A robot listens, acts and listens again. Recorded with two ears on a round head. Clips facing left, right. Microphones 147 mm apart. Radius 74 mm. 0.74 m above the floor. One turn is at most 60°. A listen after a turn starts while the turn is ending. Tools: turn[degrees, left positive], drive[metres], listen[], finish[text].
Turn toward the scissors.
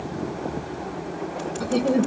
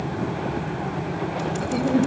Action: listen[]
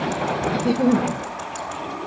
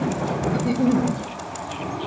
Action: listen[]
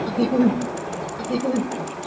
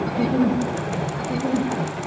Action: finish[I can't make out scissors to turn to.]